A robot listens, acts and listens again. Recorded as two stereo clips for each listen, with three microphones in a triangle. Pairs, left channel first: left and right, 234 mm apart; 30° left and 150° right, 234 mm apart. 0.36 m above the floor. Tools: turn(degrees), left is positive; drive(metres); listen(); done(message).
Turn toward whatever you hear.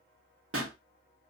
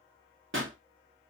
turn(degrees=-115)
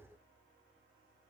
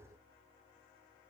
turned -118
done("I heard a pop from this way, but can't make it out now.")